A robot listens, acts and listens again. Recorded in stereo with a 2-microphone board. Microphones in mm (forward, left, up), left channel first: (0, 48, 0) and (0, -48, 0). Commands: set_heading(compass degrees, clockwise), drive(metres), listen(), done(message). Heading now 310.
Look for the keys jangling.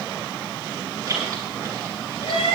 set_heading(345)
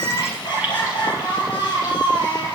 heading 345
listen()
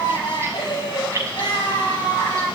set_heading(15)
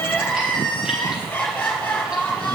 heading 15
listen()
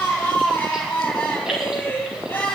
listen()
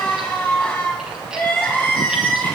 done("I heard keys jangling, but can't make it out now. It was about straight ahead or 120° right.")